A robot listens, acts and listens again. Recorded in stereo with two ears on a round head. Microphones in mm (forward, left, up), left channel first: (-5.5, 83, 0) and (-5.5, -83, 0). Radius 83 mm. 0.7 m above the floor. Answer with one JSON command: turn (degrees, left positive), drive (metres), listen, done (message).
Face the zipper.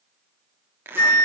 {"turn": -30}
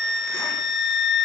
{"listen": true}
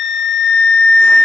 {"listen": true}
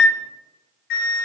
{"done": "I heard a zipper, but can't make it out now. It was about 20° left or 140° right."}